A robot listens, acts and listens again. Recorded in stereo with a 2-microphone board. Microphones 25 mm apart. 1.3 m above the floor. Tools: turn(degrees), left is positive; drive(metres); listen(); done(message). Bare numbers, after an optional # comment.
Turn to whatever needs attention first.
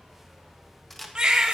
# The baby crying: about 30° right or 150° right.
turn(-30)
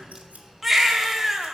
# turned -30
done("Found it: a baby crying, straight ahead, 1 to 2 m away.")